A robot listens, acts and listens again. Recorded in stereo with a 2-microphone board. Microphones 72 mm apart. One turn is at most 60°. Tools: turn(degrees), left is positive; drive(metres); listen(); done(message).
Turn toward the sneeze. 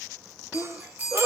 turn(degrees=-40)
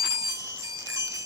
listen()
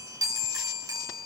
done("I heard a sneeze, but can't make it out now. It was about straight ahead or 100° right.")